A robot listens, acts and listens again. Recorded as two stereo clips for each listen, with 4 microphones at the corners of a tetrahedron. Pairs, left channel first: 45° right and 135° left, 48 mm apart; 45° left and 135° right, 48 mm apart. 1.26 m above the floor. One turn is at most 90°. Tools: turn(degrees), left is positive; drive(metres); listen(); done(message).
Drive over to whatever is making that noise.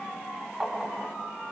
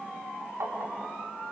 turn(degrees=-90)
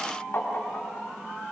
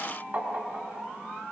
turn(degrees=-90)
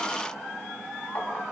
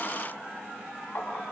drive(metres=1.0)
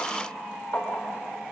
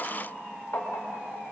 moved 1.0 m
drive(metres=1.0)
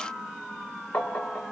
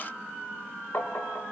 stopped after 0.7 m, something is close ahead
done("I am next to the tapping.")